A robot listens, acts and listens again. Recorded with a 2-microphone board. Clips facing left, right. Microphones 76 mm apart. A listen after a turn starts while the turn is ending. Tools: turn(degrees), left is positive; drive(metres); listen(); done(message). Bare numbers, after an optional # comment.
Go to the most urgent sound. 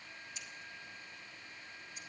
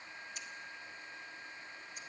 listen()
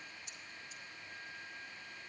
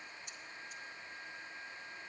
listen()
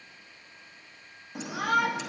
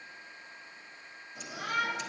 turn(90)
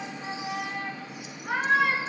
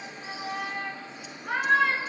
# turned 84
# So it is at 15° left.
turn(15)
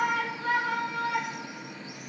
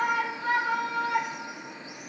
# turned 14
drive(1.0)
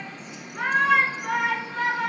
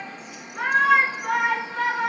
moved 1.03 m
drive(1.0)
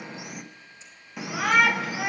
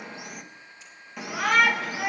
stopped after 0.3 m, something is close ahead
done("Arrived at the shout, straight ahead.")